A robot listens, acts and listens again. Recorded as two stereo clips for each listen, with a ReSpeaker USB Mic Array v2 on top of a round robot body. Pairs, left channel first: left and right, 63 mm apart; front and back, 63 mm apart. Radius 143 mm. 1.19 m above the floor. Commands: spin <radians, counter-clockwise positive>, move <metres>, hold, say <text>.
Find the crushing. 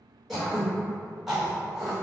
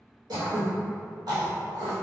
hold
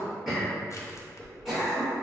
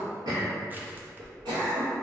spin 2.09
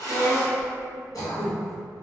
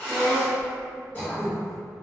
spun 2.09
hold
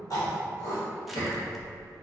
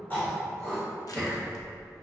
say Found it: crushing, straight ahead.